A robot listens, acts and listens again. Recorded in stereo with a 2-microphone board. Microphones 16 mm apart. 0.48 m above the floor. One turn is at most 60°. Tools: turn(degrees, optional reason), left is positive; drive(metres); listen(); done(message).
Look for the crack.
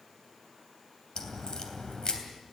turn(degrees=50, reason="The crack: about 50° left or 130° left.")
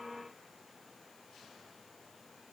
listen()
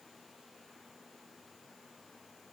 done("I heard a crack, but can't make it out now. It was about straight ahead or 80° left.")